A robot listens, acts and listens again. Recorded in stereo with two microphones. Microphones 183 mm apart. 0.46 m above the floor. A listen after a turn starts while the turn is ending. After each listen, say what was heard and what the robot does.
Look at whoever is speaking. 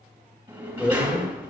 The man speaking: about 15° left or 165° left. Turn 15° left.
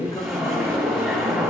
Keep listening.
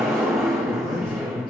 So it is at 150° left. Turn 150° left.
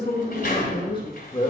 The man speaking is now 35° left. Turn 35° left.
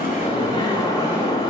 Keep listening.
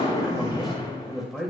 Found it: a man speaking, straight ahead.